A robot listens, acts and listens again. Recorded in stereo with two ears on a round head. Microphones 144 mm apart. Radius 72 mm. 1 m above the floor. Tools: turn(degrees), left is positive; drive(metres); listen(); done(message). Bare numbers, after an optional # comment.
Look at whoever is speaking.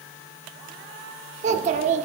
# The child speaking: about 45° right or 135° right.
turn(-45)
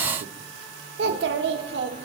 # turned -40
# So it is at 95° right.
turn(-95)
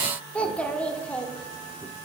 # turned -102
# The child speaking is now 10° left.
turn(10)
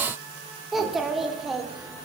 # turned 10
done("Facing the child speaking, 1 to 2 m away.")